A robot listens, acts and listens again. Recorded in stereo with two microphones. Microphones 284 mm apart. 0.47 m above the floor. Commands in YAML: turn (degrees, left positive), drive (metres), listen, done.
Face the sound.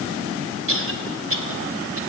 turn: -50
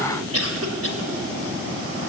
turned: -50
turn: -65
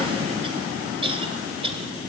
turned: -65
turn: -20
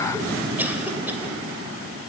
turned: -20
listen: true
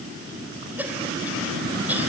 done: "Facing the cough."